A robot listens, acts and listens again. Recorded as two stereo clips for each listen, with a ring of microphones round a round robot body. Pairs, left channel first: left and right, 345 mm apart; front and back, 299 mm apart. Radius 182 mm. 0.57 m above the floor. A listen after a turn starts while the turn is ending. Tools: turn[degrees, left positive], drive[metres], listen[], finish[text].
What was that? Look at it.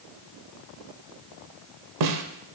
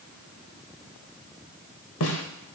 Thought: The snare drum: 55° right.
Action: turn[-55]
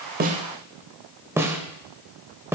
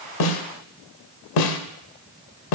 Action: finish[Facing the snare drum, under 1 m away.]